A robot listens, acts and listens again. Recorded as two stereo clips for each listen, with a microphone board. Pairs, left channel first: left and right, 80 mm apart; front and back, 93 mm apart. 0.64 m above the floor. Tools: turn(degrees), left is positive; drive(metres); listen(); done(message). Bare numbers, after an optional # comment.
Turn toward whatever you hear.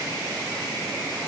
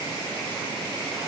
listen()
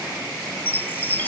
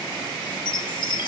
# The chime: 30° left.
turn(30)
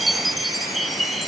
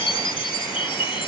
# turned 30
done("Found it: a chime, straight ahead.")